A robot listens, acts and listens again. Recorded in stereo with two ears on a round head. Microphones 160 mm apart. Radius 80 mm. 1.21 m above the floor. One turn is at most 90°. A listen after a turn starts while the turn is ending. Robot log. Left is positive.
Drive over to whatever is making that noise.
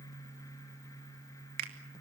note: The finger snap: about 55° right or 125° right.
cmd yaw -55
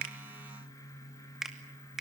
cmd fwd 1.0
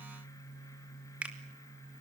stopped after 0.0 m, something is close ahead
note: The finger snap is now 10° right.
cmd yaw -10
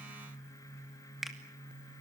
end: Something is in my way. I am facing the finger snap but have not reached it.